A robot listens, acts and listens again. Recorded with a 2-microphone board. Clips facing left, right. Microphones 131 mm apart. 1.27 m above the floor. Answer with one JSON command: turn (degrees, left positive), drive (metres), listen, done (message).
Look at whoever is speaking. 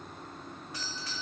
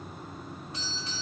{"listen": true}
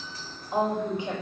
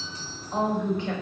{"turn": 30}
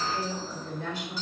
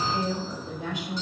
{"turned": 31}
{"turn": -20}
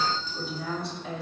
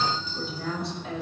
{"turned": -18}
{"done": "Found it: a woman speaking, straight ahead, over 4 m away."}